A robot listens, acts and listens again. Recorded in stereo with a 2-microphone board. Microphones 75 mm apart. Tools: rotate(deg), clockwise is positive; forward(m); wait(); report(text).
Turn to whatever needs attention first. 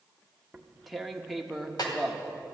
wait()
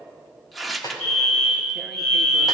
rotate(-30)
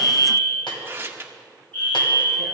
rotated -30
rotate(-150)
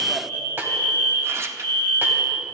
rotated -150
rotate(-35)
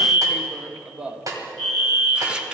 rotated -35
rotate(-15)
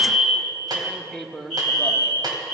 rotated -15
report("Found it: a fire alarm, straight ahead, over 4 m away.")